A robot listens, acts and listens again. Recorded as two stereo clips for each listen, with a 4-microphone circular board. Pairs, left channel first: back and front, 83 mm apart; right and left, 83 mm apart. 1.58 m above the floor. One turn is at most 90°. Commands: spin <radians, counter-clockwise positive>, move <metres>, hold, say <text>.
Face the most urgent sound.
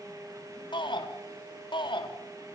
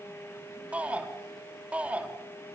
spin 1.57
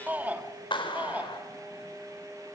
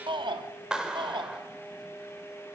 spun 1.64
spin 1.22
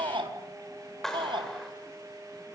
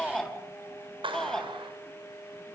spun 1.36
say Facing the shout, 2 to 4 m away.